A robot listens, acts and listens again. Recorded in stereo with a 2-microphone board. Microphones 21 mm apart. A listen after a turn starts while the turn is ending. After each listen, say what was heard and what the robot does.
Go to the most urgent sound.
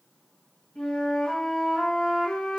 Keep listening.
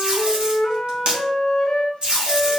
Keep listening.
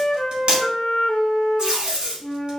I can't make out anything urgent to turn to.